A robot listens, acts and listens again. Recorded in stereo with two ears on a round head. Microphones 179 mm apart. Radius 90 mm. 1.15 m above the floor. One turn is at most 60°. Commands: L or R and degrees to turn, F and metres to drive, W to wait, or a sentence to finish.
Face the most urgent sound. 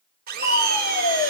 L45
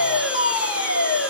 L60
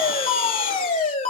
L35
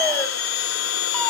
W
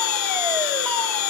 W
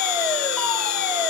I heard a fire alarm from this way, but can't make it out now.